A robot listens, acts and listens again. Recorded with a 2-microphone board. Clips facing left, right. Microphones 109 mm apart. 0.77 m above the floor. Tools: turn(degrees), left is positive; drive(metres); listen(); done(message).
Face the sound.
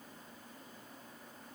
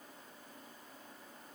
listen()
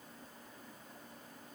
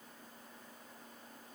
listen()
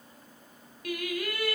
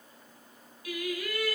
turn(degrees=65)
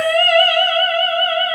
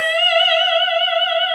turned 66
turn(degrees=40)
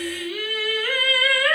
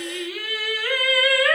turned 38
done("Found it: singing, straight ahead, 2 to 4 m away.")